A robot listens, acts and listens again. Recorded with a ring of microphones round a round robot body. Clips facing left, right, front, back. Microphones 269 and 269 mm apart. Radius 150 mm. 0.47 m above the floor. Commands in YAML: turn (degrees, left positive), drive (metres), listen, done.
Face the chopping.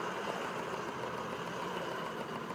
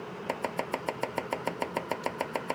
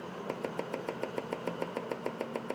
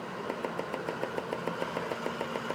turn: -85
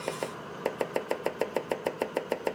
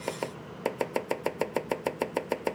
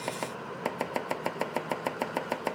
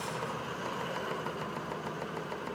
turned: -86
done: "Facing the chopping."